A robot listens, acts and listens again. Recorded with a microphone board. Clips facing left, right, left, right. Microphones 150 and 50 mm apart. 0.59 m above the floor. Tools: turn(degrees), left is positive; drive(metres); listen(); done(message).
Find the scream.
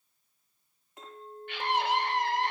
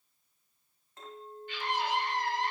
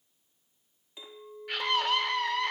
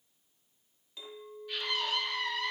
turn(degrees=65)
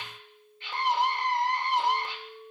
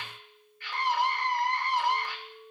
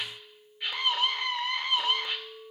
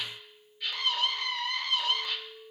turn(degrees=25)
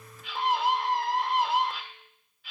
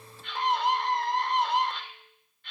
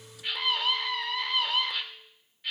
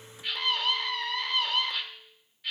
done("Found it: a scream, straight ahead.")